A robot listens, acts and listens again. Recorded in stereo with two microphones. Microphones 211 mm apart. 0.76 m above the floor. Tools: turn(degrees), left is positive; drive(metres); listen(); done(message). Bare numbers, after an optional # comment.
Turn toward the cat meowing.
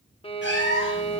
# The cat meowing: about 65° left or 115° left.
turn(65)
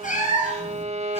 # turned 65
# So it is at 35° left.
turn(35)
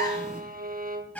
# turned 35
done("Facing the cat meowing.")